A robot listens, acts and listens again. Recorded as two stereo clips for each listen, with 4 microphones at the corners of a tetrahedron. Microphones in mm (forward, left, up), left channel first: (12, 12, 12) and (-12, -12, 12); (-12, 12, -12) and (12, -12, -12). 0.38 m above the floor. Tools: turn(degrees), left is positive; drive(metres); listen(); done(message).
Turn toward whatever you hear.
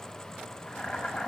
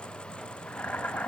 turn(degrees=95)
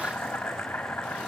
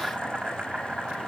turn(degrees=15)
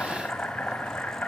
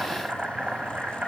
done("Facing the boiling, over 4 m away.")